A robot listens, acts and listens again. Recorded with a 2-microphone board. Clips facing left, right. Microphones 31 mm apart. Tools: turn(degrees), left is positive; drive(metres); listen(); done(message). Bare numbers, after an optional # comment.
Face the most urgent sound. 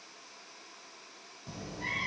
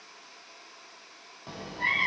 listen()
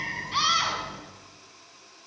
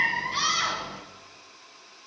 # The scream: about 25° left or 155° left.
turn(25)
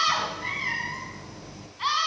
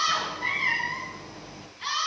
# So it is at 130° left.
turn(130)
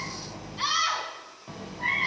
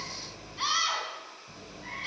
done("Facing the scream.")